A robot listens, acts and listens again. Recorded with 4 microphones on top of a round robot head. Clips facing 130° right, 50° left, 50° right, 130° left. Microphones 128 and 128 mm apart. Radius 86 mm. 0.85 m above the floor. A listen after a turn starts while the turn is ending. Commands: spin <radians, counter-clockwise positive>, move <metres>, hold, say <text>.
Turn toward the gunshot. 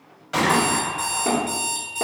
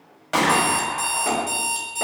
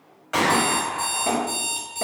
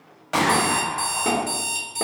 spin 1.31
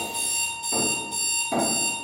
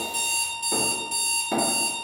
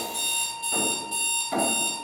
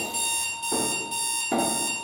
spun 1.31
say Facing where the gunshot came from. I can't hear it now.